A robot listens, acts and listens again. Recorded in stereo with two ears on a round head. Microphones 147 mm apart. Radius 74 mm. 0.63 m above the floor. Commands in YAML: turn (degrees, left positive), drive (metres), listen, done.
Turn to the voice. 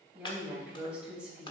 turn: -30
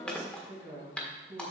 turn: -145
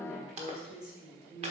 done: "Found it: a woman speaking, straight ahead, 2 to 4 m away."